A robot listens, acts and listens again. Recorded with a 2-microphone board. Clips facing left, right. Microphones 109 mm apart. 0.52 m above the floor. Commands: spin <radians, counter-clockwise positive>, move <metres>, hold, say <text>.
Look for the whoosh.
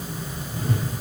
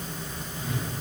spin 1.22
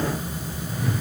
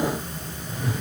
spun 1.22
say Facing the whoosh, over 4 m away.